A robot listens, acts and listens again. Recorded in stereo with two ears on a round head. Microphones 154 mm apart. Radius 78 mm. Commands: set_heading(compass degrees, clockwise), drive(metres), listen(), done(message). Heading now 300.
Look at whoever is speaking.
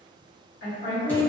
set_heading(230)
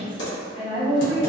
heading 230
set_heading(190)
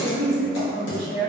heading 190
done("Facing the woman speaking, 1 to 2 m away.")